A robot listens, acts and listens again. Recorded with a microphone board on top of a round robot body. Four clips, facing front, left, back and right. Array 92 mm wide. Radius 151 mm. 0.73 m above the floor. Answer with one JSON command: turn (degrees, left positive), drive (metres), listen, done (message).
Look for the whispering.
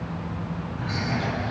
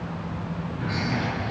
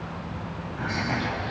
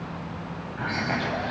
{"turn": -115}
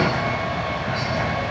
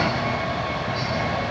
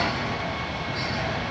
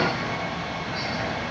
{"listen": true}
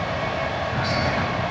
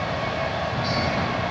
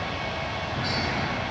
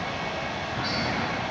{"listen": true}
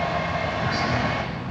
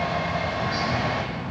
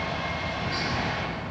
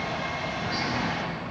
{"done": "I heard whispering from this way, but can't make it out now."}